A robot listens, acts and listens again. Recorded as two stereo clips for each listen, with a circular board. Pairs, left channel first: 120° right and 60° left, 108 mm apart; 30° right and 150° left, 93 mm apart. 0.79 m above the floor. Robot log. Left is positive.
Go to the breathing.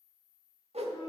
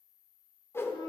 cmd idle
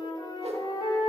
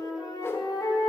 cmd idle
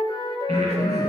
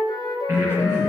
note: The breathing: 85° left.
cmd yaw +85
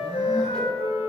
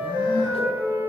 cmd idle
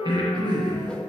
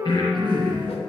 note: The breathing is now 10° left.
cmd yaw +10
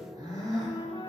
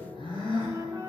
cmd fwd 1.0
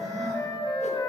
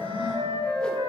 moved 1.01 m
cmd idle
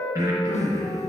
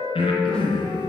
cmd fwd 1.0
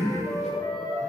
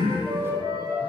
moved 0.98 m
cmd fwd 1.0
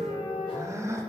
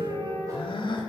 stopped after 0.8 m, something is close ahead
end: I am next to the breathing.